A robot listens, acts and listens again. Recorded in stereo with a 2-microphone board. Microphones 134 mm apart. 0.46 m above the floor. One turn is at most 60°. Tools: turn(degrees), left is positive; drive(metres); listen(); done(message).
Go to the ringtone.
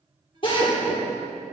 listen()
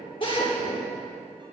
listen()
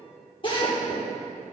done("I can't make out a ringtone to turn to.")